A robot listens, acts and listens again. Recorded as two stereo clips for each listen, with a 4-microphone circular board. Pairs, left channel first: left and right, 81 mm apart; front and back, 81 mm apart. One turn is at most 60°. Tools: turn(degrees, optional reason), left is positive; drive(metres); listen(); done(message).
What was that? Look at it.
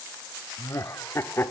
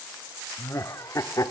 turn(degrees=35, reason="The laughter: 35° left.")
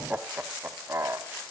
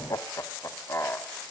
turn(degrees=-50, reason="The laughter is now 50° right.")
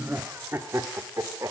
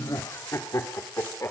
turn(degrees=-50, reason="The laughter is now 50° right.")
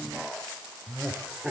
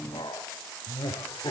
turn(degrees=-10, reason="The laughter is now 10° right.")
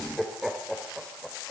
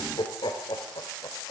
done("Facing the laughter.")